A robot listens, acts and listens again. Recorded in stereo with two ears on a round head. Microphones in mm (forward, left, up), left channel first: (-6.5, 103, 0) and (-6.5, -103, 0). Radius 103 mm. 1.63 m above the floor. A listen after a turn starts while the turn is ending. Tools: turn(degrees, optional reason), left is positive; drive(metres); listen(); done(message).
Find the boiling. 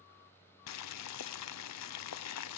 turn(degrees=90)
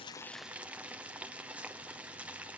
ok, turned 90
done("Facing the boiling.")